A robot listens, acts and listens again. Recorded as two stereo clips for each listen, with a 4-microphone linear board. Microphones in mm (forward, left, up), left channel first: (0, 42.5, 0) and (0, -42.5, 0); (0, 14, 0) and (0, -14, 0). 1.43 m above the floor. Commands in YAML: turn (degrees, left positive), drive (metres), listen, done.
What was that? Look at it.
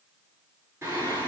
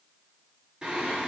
turn: -30
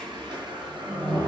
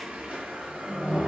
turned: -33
turn: -120
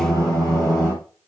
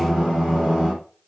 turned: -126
done: "Found it: singing, straight ahead, over 4 m away."